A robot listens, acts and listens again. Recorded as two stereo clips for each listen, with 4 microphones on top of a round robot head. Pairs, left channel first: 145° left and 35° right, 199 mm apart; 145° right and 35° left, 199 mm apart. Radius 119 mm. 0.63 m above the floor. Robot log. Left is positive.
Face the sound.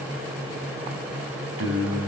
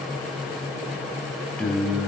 note: The singing: 50° right.
cmd yaw -50
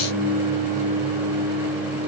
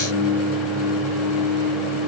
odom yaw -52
note: The singing is now 30° left.
cmd yaw +30
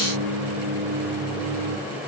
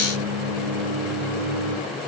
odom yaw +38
note: The singing is now 10° left.
cmd yaw +10
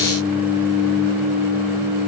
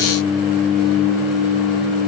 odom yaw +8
end: Facing the singing.